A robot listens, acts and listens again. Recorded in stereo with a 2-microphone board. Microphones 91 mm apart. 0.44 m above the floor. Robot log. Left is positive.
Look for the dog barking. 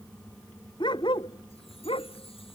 note: The dog barking: about 70° left or 110° left.
cmd yaw +70
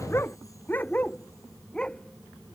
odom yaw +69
note: So it is at 10° left.
cmd yaw +10
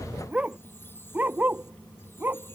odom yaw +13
note: The dog barking is now 20° right.
cmd yaw -20
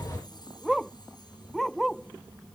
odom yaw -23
end: Found it: a dog barking, straight ahead.